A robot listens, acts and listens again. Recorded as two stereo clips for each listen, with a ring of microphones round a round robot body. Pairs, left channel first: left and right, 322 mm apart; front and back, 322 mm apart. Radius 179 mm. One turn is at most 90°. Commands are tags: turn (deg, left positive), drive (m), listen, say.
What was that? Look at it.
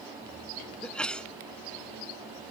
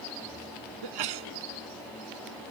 <turn deg="90"/>
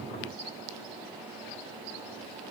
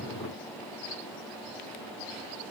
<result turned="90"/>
<turn deg="85"/>
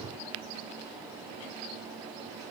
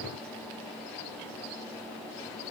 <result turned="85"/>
<say>Facing where the sneeze came from. I can't hear it now.</say>